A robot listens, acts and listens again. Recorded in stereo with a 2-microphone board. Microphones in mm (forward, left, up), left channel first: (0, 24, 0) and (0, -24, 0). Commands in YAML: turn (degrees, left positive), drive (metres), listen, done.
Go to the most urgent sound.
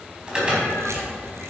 turn: -20
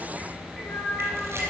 listen: true
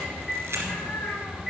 drive: 1.0
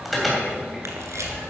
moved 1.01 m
drive: 1.0
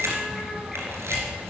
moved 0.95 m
listen: true
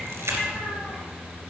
listen: true
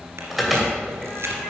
drive: 1.0
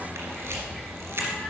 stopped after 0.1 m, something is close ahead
listen: true
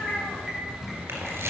done: "Arrived at the alarm, straight ahead."